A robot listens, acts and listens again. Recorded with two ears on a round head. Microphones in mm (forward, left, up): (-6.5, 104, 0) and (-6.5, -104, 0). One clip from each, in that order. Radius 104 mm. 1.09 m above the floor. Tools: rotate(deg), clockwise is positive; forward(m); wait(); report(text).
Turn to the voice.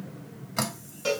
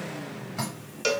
wait()
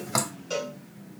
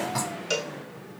wait()
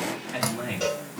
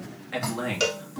rotate(50)
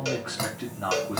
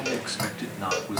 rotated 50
rotate(80)
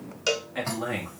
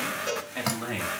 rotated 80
rotate(10)
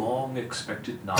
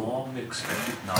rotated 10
report("Found it: a man speaking, straight ahead, 1 to 2 m away.")